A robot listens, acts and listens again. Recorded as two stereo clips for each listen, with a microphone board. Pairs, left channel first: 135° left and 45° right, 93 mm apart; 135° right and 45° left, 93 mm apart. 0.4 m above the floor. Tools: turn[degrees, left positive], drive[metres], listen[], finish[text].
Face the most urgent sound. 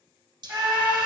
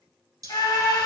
Thought: The scream: 100° right.
Action: turn[-100]
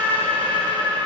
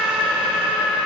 Thought: The scream is now 35° right.
Action: turn[-35]
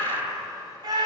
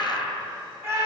Thought: The scream is now 10° right.
Action: turn[-10]
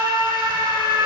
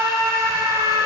Action: finish[Found it: a scream, straight ahead.]